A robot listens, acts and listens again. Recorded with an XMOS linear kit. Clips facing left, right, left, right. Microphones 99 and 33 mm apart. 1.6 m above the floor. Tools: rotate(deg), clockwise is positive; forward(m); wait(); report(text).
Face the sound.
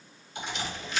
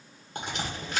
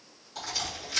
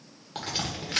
rotate(50)
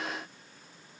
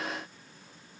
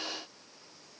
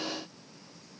wait()
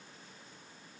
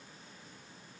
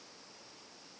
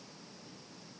report("I heard a crack, but can't make it out now. It was about straight ahead or 80° right.")